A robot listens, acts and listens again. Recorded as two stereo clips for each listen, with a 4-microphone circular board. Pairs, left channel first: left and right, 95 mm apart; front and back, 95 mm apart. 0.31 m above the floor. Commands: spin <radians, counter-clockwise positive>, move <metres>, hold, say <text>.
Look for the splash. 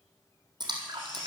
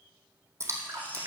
spin -2.09
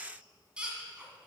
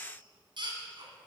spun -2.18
say Facing where the splash came from. I can't hear it now.